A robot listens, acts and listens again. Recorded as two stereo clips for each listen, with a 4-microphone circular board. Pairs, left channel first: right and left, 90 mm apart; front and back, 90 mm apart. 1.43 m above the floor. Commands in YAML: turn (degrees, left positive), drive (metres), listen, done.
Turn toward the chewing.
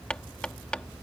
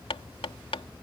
listen: true
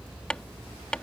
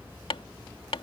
listen: true
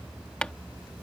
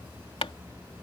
done: "I can't make out chewing, only hammering."